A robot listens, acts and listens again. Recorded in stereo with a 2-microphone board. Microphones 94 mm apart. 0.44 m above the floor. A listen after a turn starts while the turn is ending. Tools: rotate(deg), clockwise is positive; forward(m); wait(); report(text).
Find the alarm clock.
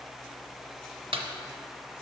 wait()
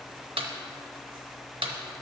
wait()
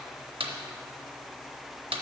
report("I can't make out an alarm clock to turn to.")